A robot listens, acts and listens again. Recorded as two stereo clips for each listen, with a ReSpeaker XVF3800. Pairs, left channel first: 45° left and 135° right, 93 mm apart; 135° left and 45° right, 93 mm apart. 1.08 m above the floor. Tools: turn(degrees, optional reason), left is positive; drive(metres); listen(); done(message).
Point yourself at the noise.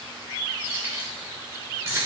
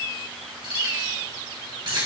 turn(degrees=-75, reason="The keys jangling: 75° right.")
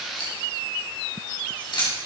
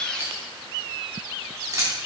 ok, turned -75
turn(degrees=10, reason="The keys jangling is now 10° left.")
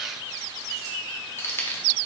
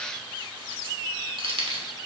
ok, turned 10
turn(degrees=-25, reason="The keys jangling is now 25° right.")
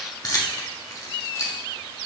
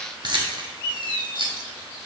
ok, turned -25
turn(degrees=-10, reason="The keys jangling is now 10° right.")
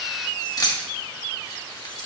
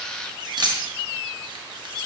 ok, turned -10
done("Facing the keys jangling.")